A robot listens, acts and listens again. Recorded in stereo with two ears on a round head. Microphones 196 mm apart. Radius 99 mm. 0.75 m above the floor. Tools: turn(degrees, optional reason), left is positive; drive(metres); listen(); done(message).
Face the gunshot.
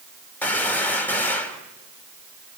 turn(degrees=30)
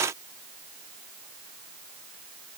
listen()
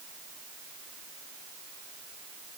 done("I heard a gunshot, but can't make it out now. It was about 20° right or 140° left.")